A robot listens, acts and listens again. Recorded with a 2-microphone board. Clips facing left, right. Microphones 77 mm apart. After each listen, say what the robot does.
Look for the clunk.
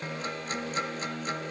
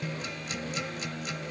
Keep listening.
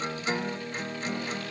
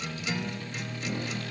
Keep listening.
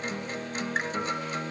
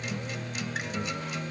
I can't make out a clunk, only a guitar.